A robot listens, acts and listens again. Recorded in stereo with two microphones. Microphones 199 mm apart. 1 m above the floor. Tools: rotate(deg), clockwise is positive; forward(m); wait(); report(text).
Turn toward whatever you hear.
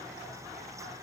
wait()
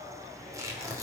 rotate(15)
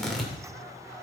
report("Facing the tearing paper, 2 to 4 m away.")